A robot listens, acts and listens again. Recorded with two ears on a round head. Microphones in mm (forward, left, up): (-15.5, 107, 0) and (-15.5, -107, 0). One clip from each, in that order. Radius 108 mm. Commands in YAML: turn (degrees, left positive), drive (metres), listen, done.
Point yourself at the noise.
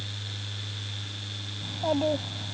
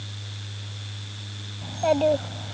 turn: -90
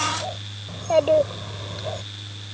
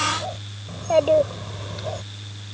done: "Facing the child speaking."